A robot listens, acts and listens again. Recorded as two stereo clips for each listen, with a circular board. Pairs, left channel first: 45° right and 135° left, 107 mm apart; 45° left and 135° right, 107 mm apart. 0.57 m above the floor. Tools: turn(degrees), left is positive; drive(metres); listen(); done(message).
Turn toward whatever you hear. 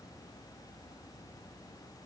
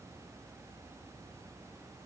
listen()
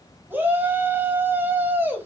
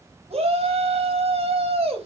turn(degrees=-155)
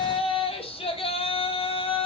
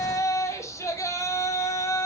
turn(degrees=-15)
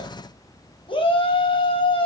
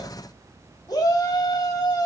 done("Found it: a shout, straight ahead.")